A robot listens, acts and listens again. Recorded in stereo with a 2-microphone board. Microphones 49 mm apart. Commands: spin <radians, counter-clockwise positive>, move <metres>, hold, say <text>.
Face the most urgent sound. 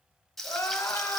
spin 1.57
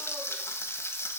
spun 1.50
hold
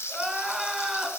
say Found it: crying, straight ahead, 1 to 2 m away.